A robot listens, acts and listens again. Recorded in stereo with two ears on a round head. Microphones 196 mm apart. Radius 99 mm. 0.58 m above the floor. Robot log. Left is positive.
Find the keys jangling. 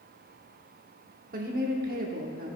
cmd idle
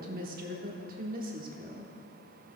cmd idle
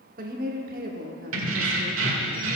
note: The keys jangling: about 60° right or 120° right.
cmd yaw -60
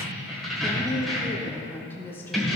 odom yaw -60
end: Found it: keys jangling, straight ahead, 1 to 2 m away.